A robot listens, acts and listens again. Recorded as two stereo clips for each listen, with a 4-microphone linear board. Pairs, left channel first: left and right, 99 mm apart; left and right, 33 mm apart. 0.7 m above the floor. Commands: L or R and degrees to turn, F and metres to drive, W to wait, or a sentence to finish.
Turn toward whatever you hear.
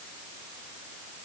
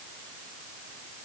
W
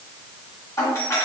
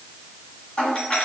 L25
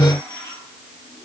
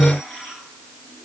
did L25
W
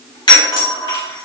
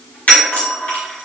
L125
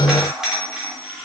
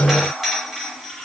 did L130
Facing the doorbell, 1 to 2 m away.